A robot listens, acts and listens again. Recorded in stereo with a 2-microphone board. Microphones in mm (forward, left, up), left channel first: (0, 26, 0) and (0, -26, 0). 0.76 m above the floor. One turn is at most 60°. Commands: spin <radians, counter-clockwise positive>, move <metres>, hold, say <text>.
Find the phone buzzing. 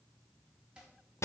hold
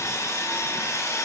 hold
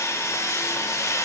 say I can't make out a phone buzzing to turn to.